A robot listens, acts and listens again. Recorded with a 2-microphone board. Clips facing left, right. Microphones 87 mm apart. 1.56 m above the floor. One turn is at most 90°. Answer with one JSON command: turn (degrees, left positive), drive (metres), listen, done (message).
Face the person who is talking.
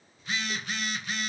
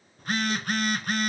{"listen": true}
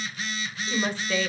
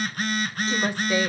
{"turn": -30}
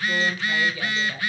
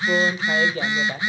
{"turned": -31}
{"turn": -90}
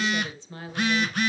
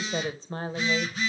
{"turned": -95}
{"turn": -40}
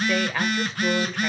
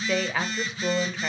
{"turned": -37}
{"done": "Found it: a woman speaking, straight ahead."}